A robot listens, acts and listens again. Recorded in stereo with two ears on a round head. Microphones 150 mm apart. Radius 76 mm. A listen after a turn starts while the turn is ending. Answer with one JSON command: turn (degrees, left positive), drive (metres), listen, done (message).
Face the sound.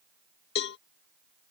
{"turn": 70}
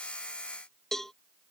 {"done": "Found it: a cowbell, straight ahead."}